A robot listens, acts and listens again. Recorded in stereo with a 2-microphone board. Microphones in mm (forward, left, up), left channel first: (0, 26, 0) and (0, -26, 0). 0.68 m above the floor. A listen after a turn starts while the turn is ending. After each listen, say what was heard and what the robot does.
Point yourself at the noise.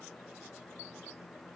Keep listening.
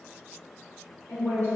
The woman speaking: about 60° left or 120° left. Turn 60° left.
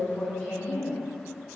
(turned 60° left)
So it is at 20° left. Turn 20° left.
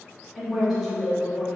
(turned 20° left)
Facing the woman speaking.